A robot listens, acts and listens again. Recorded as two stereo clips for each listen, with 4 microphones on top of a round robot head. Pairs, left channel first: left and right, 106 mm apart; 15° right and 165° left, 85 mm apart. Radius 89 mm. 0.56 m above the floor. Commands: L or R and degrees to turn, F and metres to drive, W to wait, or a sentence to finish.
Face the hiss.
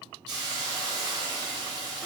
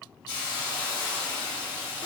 R40
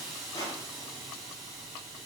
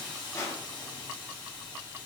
Facing the hiss, 1 to 2 m away.